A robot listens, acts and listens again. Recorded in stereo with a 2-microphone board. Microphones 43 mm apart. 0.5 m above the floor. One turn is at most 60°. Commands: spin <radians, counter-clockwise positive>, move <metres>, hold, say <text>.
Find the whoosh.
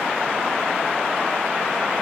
hold
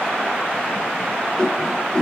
spin 0.35
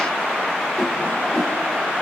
say Facing the whoosh, 1 to 2 m away.